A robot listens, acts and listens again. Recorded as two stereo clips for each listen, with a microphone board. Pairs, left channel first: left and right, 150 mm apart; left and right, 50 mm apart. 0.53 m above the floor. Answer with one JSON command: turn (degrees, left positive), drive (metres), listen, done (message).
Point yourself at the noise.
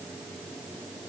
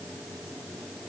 {"listen": true}
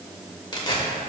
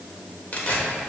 {"turn": 35}
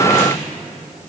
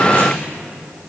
{"listen": true}
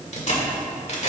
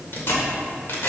{"turn": 105}
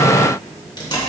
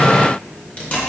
{"turn": 40}
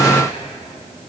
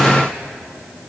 {"listen": true}
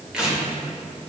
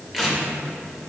{"done": "Facing the tearing paper."}